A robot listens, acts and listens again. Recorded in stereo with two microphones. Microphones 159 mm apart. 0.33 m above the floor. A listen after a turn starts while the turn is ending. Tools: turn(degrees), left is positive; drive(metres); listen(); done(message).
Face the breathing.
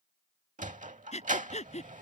turn(degrees=45)
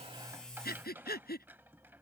turn(degrees=90)
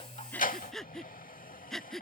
done("Found it: breathing, straight ahead.")